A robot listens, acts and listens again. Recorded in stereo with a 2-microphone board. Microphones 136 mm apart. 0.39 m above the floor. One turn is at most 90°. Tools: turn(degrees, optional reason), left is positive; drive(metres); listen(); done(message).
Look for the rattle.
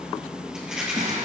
turn(degrees=-30)
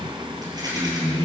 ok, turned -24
turn(degrees=-90, reason="So it is at 150° right.")
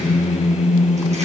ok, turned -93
turn(degrees=-55, reason="Nothing new. It was at 55° right.")
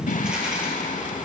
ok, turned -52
listen()
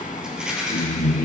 done("Found it: a rattle, straight ahead, 2 to 4 m away.")